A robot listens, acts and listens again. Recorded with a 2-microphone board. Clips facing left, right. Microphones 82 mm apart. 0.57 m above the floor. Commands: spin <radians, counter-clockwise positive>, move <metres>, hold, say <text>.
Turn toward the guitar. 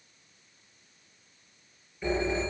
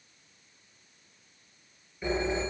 hold
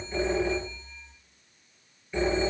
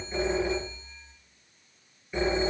hold
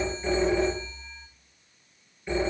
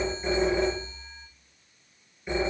say I can't make out a guitar, only a phone ringing.